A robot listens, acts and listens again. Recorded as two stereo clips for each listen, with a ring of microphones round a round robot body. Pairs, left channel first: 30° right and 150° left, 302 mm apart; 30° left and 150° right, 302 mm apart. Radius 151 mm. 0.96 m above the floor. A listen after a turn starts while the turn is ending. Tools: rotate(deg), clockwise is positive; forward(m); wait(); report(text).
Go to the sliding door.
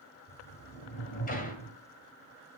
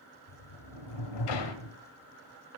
rotate(-35)
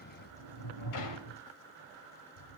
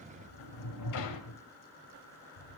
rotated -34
forward(1.0)
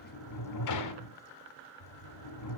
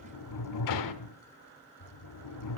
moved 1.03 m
forward(1.0)
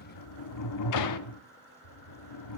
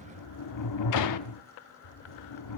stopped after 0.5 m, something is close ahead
report("Arrived at the sliding door, straight ahead.")